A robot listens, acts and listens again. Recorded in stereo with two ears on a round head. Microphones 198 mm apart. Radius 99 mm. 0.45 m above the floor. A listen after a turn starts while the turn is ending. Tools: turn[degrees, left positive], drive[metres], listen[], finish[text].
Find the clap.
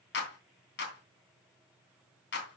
Thought: The clap: about 55° left or 125° left.
Action: turn[55]
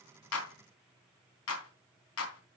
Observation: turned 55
Thought: So it is at 70° left.
Action: turn[70]
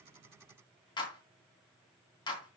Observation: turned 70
Thought: The clap is now 20° left.
Action: turn[20]
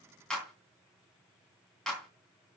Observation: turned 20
Action: finish[Found it: a clap, straight ahead.]